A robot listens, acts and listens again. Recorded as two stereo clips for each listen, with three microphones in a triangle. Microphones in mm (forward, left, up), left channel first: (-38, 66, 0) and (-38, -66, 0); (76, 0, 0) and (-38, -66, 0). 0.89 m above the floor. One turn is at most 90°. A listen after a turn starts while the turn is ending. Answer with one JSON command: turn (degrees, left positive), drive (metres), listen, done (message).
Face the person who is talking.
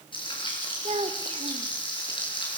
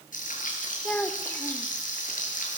{"turn": -50}
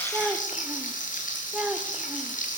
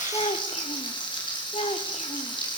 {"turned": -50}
{"done": "Found it: a child speaking, straight ahead, 1 to 2 m away."}